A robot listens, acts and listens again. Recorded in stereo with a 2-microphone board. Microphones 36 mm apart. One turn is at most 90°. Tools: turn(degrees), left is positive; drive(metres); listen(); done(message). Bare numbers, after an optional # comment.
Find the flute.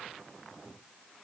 listen()
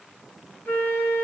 # The flute: about 60° left or 120° left.
turn(60)
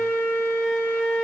# So it is at 55° left.
turn(55)
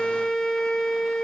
done("Facing the flute.")